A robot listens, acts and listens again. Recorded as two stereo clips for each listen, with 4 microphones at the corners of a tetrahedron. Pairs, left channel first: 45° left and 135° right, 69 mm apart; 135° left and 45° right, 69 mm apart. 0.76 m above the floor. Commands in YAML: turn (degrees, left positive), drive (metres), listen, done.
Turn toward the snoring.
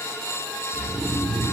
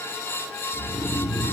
turn: -125
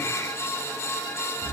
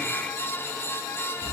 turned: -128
done: "Found it: snoring, straight ahead."